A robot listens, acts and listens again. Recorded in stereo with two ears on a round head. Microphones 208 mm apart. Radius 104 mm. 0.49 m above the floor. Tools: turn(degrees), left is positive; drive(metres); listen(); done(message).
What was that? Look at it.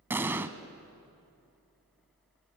turn(degrees=-30)
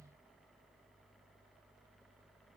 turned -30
listen()
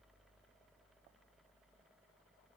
done("I heard an explosion, but can't make it out now. It was about 20° left or 140° right.")